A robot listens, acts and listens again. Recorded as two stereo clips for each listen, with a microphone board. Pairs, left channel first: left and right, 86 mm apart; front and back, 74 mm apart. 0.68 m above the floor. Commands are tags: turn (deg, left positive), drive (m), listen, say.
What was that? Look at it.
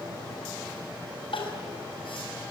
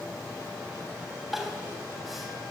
<turn deg="90"/>
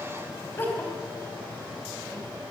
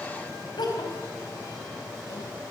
<turn deg="20"/>
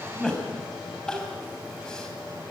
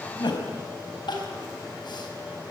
<turn deg="10"/>
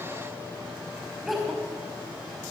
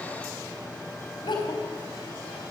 <say>Facing the crying, over 4 m away.</say>